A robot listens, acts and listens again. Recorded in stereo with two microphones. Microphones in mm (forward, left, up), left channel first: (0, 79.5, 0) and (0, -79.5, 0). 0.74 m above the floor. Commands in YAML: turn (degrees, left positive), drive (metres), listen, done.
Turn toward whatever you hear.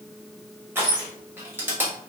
turn: -30
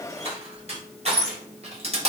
turn: -140
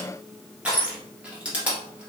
turn: -10
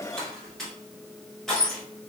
done: "Found it: crushing, straight ahead."